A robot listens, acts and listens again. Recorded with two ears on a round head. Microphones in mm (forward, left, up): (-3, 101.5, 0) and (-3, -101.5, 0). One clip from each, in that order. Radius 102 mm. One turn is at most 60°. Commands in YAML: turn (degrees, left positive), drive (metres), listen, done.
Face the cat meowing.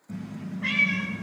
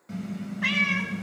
turn: -55
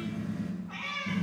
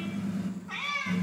turn: -55
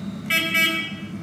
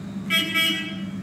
listen: true
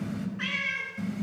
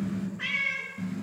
turn: 15
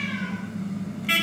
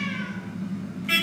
listen: true
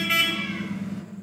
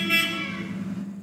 listen: true
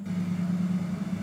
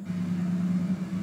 done: "I heard a cat meowing from this way, but can't make it out now."